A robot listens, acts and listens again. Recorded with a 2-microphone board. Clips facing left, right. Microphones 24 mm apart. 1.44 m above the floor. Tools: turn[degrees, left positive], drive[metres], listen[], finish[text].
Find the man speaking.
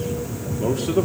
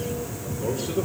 Action: turn[90]
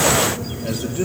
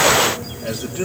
Thought: So it is at 10° right.
Action: turn[-10]
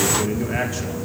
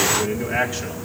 Thought: The man speaking is now 10° right.
Action: turn[-10]
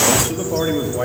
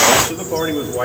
Thought: The man speaking is now 15° right.
Action: turn[-15]
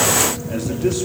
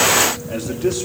Action: finish[Facing the man speaking, 2 to 4 m away.]